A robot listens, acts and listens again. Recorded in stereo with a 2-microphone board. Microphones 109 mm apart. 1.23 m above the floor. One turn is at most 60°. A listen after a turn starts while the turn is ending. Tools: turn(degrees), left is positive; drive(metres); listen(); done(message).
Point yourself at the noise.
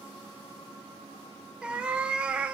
turn(degrees=-30)
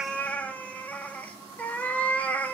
turn(degrees=15)
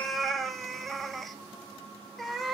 done("Found it: a cat meowing, straight ahead, 1 to 2 m away.")